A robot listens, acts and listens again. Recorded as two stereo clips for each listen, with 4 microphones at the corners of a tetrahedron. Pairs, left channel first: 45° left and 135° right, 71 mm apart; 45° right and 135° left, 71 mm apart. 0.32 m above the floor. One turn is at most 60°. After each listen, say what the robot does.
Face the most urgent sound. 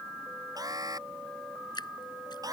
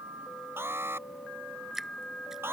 Turn 60° right.
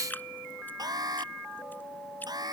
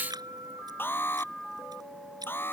Turn 60° right.
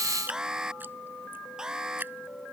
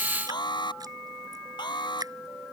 Turn 50° right.
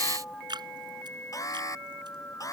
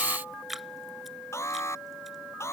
Found it: an alarm, straight ahead.